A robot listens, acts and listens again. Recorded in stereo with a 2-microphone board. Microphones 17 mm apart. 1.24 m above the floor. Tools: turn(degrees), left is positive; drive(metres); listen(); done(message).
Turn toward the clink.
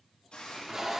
listen()
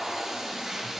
listen()
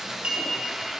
turn(degrees=-90)
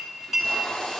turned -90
turn(degrees=-10)
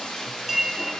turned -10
done("Facing the clink.")